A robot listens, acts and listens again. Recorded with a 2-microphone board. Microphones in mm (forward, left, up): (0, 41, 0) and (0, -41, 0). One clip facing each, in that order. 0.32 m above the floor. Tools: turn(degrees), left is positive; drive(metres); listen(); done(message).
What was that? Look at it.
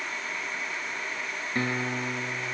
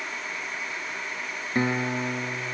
turn(degrees=-20)
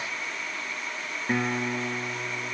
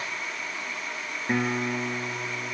done("Facing the guitar.")